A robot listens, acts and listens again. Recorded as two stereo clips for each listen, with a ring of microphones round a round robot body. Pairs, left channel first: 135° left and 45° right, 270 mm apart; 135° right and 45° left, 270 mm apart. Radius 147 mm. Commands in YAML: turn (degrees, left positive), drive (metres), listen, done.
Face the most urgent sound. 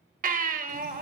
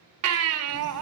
turn: 15
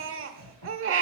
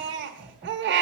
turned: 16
done: "Facing the baby crying, 1 to 2 m away."